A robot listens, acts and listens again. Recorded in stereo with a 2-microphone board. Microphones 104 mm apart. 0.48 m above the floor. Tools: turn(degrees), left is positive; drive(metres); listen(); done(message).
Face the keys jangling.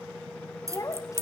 turn(degrees=-25)
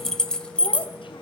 turn(degrees=10)
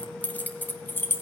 turn(degrees=20)
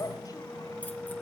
listen()
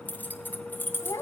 turn(degrees=20)
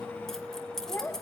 done("Found it: keys jangling, straight ahead.")